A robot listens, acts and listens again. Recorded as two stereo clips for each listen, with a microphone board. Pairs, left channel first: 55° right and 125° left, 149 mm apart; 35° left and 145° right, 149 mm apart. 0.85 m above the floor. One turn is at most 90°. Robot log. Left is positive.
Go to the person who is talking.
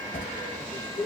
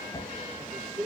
note: The man speaking: 115° right.
cmd yaw -90
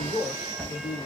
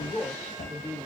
note: The man speaking is now 30° right.
cmd yaw -30
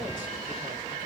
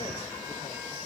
cmd idle
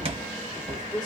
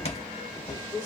cmd fwd 1.0
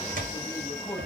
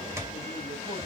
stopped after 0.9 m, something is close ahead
cmd idle
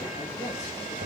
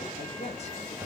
end: Arrived at the man speaking, straight ahead.